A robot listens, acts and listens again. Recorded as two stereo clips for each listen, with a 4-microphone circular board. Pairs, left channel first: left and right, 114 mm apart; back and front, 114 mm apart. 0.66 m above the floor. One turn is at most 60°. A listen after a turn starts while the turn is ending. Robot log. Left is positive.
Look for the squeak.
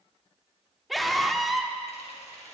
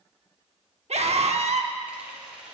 cmd idle
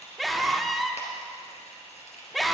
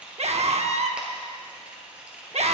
cmd idle
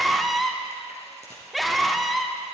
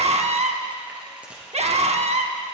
end: I can't make out a squeak to turn to.